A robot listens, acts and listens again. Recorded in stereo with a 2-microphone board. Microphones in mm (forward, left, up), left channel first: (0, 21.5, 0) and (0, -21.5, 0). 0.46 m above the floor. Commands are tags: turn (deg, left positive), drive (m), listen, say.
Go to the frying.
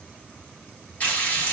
<turn deg="40"/>
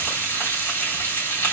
<turn deg="100"/>
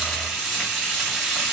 <turn deg="-10"/>
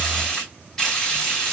<drive m="1.0"/>
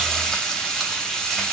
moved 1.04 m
<drive m="1.0"/>
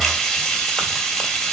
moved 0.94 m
<drive m="1.0"/>
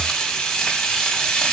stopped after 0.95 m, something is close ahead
<turn deg="15"/>
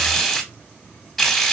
<say>I am next to the frying.</say>